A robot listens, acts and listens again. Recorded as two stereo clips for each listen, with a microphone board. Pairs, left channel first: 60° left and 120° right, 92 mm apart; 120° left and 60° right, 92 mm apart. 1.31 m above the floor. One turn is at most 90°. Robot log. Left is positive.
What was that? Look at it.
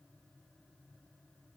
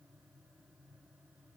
cmd idle
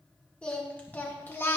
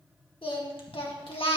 note: The singing: 125° left.
cmd yaw +90
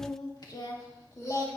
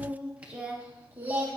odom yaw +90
end: Found it: singing, straight ahead, 2 to 4 m away.